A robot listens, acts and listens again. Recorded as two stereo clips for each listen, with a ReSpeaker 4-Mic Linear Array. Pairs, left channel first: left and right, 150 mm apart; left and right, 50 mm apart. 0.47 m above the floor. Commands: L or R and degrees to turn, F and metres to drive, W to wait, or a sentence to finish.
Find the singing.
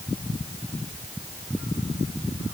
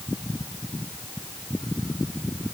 W
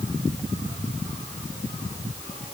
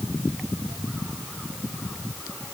W
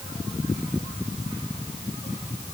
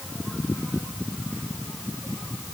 I can't make out singing to turn to.